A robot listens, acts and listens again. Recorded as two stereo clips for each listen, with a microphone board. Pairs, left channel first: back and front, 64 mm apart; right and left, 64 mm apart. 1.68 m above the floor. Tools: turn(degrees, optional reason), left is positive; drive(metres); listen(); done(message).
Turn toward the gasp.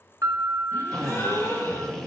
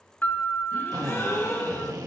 turn(degrees=-135, reason="The gasp: 135° right.")
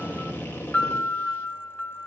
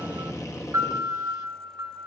done("Facing where the gasp came from. I can't hear it now.")